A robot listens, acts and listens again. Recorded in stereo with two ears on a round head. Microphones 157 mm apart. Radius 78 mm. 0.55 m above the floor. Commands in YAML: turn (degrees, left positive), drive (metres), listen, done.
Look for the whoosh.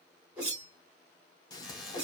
turn: -30
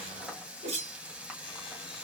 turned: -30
turn: -140
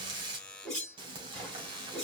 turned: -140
done: "Found it: a whoosh, straight ahead, 2 to 4 m away."